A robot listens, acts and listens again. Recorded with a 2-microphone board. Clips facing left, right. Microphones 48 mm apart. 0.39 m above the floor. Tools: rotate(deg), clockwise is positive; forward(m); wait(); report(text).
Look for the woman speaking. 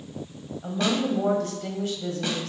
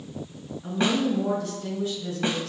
rotate(-55)
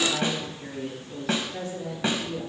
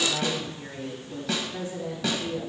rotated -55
rotate(10)
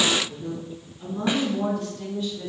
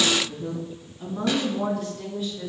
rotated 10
rotate(10)
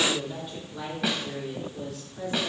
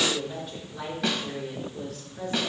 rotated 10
report("Found it: a woman speaking, straight ahead.")